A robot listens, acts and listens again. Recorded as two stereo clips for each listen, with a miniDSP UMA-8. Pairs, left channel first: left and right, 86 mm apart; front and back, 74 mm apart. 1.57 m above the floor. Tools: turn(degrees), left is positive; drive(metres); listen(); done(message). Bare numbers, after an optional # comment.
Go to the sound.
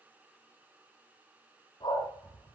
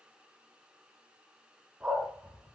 # The dog barking: 105° left.
turn(105)
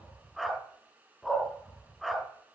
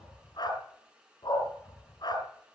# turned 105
drive(1.0)
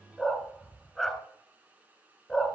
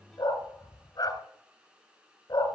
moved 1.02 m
drive(1.0)
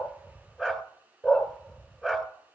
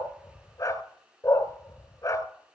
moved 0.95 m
# The dog barking is now 10° left.
turn(10)
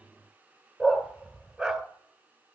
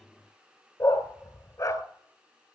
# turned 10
drive(1.0)
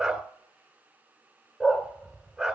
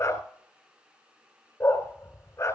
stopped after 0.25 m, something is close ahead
done("I am next to the dog barking.")